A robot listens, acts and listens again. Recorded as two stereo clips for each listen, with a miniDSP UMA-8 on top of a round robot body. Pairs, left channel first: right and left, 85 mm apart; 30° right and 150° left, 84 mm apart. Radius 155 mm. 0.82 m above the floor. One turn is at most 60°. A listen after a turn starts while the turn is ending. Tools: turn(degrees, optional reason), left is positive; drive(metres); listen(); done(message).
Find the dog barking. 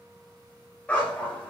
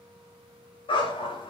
turn(degrees=-10, reason="The dog barking: 10° right.")
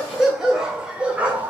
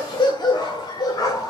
turn(degrees=20, reason="The dog barking is now 20° left.")
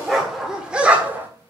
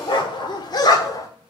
turn(degrees=20, reason="The dog barking is now 20° left.")
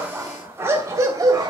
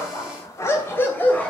turn(degrees=45, reason="The dog barking is now 45° left.")
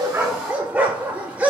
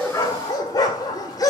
turn(degrees=15, reason="The dog barking is now 15° left.")
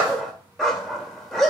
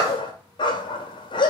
done("Found it: a dog barking, straight ahead, 1 to 2 m away.")